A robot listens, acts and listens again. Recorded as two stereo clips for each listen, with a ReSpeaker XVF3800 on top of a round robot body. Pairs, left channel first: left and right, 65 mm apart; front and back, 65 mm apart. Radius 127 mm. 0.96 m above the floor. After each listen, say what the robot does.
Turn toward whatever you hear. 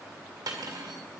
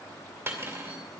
Turn 115° right.
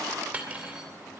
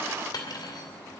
Turn 20° right.
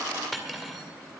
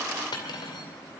Facing the cutlery clinking.